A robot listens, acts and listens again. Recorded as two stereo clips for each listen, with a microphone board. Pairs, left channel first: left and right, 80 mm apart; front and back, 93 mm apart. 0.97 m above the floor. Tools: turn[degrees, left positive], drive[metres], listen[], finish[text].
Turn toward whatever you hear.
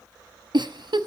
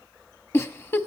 Thought: The giggle: 60° right.
Action: turn[-60]
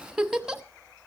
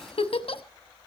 Action: finish[Found it: a giggle, straight ahead.]